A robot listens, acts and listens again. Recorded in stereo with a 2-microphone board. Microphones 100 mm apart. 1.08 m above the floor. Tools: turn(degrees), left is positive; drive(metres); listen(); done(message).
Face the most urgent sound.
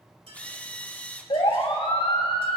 turn(degrees=70)
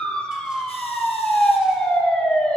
turn(degrees=10)
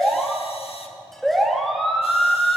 done("Facing the siren.")